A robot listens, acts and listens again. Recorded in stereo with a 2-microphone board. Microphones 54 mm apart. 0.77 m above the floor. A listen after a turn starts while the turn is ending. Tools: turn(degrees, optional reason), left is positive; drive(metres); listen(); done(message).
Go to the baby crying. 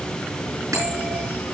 listen()
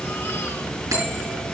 listen()
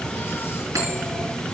done("I can't make out a baby crying, only a bell.")